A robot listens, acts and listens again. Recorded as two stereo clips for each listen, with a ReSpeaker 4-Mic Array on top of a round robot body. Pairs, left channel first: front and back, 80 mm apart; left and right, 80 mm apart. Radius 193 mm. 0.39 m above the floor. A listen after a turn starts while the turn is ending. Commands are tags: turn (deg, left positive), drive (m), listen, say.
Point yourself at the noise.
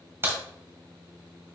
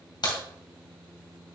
<turn deg="120"/>
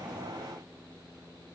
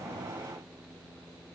<say>I heard a crack from this way, but can't make it out now.</say>